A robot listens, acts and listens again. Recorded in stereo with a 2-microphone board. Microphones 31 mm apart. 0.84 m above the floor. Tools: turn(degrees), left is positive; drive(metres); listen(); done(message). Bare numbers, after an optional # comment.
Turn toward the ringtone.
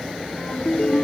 # The ringtone: about 45° left or 135° left.
turn(45)
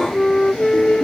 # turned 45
listen()
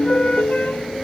# So it is at 90° left.
turn(90)
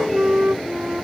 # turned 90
listen()
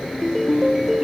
done("Facing the ringtone.")